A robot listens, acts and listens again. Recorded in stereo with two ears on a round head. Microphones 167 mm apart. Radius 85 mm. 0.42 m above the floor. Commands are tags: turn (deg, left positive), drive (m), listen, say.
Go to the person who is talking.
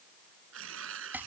<listen/>
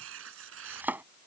<listen/>
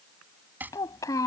<turn deg="20"/>
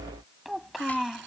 <drive m="1.0"/>
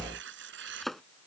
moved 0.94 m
<listen/>
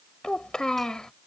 <drive m="1.0"/>
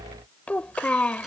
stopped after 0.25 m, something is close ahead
<turn deg="10"/>
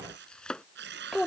<say>I am next to the child speaking.</say>